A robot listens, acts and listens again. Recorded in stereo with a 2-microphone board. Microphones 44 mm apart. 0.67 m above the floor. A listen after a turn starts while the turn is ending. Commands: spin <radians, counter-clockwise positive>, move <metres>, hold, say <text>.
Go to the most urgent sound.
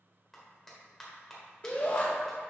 spin 0.52
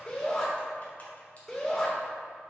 move 1.0
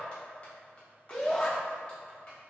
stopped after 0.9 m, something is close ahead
spin 0.17
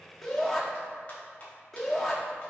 say I am next to the shout.